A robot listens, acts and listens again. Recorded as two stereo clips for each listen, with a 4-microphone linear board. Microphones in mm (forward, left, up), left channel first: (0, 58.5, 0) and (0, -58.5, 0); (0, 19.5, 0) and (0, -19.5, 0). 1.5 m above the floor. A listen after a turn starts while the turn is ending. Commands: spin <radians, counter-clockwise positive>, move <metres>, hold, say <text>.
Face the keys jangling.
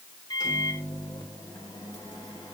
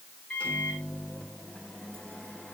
hold
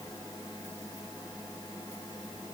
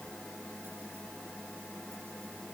hold
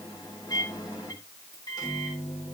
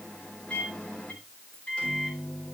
say I can't make out keys jangling to turn to.